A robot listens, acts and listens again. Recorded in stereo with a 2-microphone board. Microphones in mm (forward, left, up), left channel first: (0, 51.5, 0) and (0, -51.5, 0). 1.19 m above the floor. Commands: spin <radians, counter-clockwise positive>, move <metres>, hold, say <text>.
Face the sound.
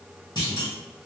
spin 0.79
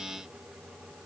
hold
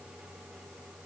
say I heard a clunk, but can't make it out now. It was about straight ahead or 90° left.